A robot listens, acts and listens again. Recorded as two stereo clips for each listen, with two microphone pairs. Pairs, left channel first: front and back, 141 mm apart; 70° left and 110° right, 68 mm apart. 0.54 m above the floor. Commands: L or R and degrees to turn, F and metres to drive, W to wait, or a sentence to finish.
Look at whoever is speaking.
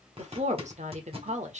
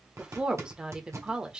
L175
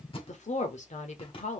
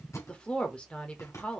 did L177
Facing the woman speaking, 1 to 2 m away.